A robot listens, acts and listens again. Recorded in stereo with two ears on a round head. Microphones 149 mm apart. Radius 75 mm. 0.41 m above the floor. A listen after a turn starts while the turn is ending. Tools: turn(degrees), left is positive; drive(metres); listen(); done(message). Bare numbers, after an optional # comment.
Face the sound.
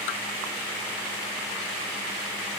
listen()
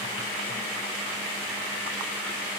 listen()
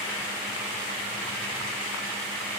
done("I can't make out anything.")